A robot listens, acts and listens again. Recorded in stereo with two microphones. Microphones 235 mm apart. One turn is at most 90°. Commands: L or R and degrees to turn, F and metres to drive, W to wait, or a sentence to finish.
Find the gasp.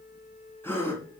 L30
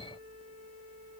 W
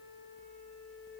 I heard a gasp, but can't make it out now. It was about 20° right or 140° left.